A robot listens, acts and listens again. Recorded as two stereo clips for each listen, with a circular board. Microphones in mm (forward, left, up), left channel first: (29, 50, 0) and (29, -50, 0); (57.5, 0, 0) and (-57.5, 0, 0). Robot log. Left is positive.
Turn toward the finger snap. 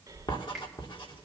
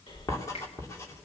end: Found it: a finger snap, straight ahead, over 4 m away.